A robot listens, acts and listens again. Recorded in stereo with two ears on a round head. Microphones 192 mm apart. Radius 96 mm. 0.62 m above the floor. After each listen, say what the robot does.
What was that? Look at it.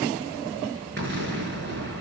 Turn 50° right.
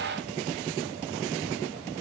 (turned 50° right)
Keep listening.
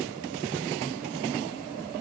I heard an explosion, but can't make it out now. It was about straight ahead or 80° right.